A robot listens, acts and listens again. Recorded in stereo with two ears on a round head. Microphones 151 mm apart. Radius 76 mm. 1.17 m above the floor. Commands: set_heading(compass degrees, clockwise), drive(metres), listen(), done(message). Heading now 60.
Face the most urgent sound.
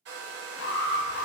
set_heading(350)
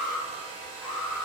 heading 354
done("Found it: an alarm, straight ahead, under 1 m away.")